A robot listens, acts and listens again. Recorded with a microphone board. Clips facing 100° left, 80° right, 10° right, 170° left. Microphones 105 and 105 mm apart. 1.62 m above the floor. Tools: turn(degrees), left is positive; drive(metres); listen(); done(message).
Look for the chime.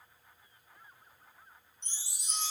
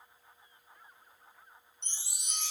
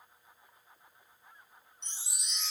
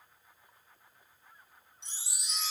turn(degrees=-100)
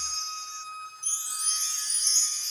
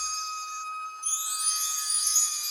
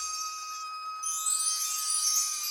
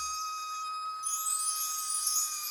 done("Facing the chime, under 1 m away.")